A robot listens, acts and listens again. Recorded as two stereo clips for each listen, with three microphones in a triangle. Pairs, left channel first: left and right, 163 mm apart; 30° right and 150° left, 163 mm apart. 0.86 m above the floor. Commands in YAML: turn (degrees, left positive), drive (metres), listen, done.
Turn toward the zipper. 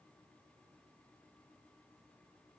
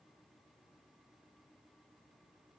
listen: true
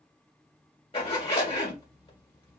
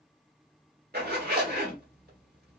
turn: 145
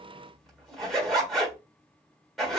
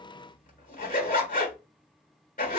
done: "Facing the zipper."